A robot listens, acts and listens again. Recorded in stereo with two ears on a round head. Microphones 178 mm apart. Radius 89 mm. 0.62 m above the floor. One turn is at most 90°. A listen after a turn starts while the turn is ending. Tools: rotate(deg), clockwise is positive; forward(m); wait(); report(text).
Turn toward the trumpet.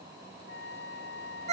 rotate(-55)
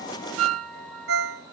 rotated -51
wait()
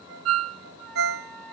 wait()
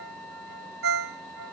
report("Found it: a trumpet, straight ahead.")